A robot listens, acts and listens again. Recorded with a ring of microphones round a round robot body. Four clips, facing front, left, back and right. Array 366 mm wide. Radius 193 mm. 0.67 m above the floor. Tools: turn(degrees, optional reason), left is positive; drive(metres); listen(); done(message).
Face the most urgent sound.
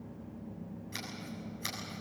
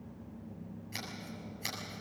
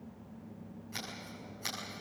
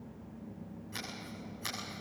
listen()
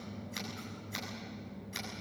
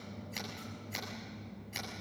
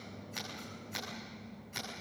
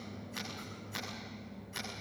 listen()
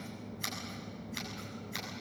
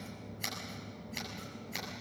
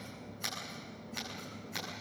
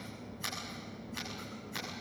done("I can't make out anything urgent, only scissors.")